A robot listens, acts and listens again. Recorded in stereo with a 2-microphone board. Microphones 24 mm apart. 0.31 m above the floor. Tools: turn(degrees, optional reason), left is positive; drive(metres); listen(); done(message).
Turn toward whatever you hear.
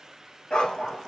turn(degrees=45, reason="The dog barking: about 45° left or 135° left.")
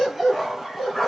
done("Found it: a dog barking, straight ahead.")